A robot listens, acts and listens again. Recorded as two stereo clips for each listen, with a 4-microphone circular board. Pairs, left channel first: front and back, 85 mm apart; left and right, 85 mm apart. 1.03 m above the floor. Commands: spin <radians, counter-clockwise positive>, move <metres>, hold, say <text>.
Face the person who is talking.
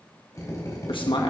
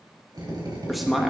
say Found it: a man speaking, straight ahead.